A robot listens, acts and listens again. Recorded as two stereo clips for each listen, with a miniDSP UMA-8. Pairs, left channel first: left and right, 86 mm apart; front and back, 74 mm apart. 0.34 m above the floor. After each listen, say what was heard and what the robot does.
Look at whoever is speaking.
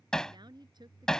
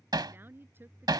The woman speaking: 120° right. Turn 120° right.
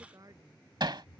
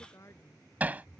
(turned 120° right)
The woman speaking is now 45° right. Turn 45° right.
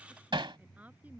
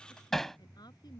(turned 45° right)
The woman speaking is now 20° right. Turn 20° right.
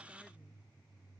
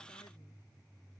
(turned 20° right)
Keep listening.
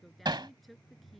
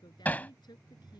Found it: a woman speaking, straight ahead.